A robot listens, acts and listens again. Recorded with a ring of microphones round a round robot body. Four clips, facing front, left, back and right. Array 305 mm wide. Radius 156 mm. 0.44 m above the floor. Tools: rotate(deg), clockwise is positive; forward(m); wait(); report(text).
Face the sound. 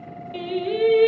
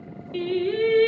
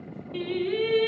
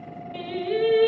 rotate(-25)
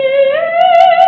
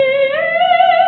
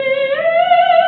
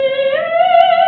report("Facing the singing, 1 to 2 m away.")